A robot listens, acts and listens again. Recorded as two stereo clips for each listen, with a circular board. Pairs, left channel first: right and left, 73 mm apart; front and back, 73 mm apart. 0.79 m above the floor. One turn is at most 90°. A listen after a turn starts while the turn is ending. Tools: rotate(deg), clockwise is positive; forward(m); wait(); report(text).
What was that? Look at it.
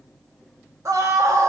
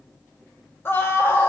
rotate(-55)
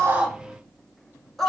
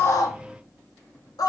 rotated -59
report("Facing the scream, under 1 m away.")